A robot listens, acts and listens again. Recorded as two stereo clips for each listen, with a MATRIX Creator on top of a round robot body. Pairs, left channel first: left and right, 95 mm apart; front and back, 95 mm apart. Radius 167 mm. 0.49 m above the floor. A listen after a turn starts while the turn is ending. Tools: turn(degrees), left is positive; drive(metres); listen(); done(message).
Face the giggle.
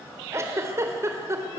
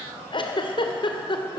turn(degrees=-30)
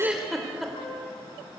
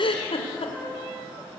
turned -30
done("Facing the giggle, 2 to 4 m away.")